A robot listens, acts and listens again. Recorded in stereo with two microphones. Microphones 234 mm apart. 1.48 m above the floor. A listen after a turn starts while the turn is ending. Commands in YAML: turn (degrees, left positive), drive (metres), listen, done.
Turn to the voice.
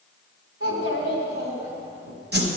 turn: -90
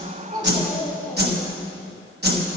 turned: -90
listen: true
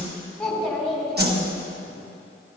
done: "Found it: a child speaking, straight ahead."